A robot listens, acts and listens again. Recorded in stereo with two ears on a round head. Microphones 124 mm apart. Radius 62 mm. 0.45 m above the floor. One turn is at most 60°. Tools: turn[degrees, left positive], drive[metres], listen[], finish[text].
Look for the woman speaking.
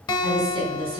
Thought: The woman speaking: about 40° right or 140° right.
Action: turn[-40]
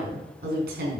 Thought: So it is at 105° right.
Action: turn[-60]
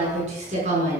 Thought: The woman speaking is now 45° right.
Action: turn[-45]
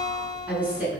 Thought: The woman speaking is now 10° right.
Action: turn[-10]
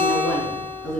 Action: finish[Facing the woman speaking, over 4 m away.]